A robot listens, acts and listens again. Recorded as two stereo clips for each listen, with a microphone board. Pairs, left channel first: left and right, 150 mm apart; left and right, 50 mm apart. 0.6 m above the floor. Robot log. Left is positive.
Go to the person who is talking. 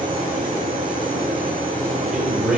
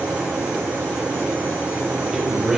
cmd yaw -30
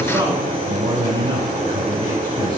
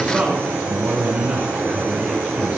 note: So it is at 145° right.
cmd yaw -145
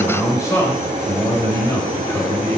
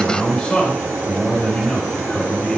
note: The man speaking is now 25° left.
cmd yaw +25
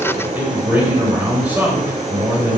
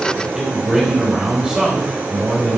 note: The man speaking is now 10° right.
cmd yaw -10
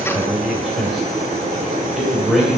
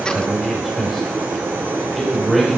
cmd fwd 1.0
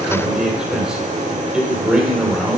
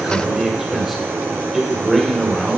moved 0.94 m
cmd fwd 1.0
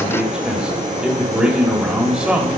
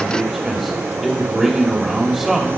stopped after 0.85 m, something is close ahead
end: I am next to the man speaking.